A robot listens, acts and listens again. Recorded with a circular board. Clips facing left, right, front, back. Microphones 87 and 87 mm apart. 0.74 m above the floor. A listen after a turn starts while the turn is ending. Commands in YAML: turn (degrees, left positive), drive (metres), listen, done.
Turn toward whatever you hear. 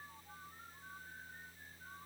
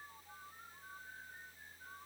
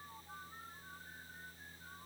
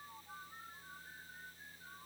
listen: true
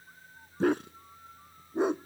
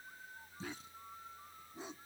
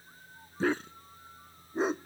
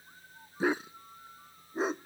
turn: 90
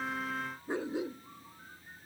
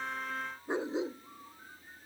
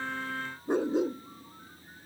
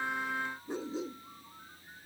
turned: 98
turn: -25
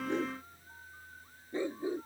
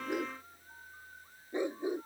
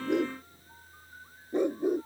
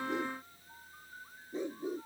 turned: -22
turn: -20
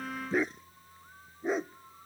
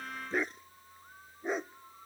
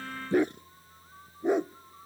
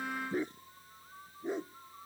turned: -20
done: "Facing the dog barking."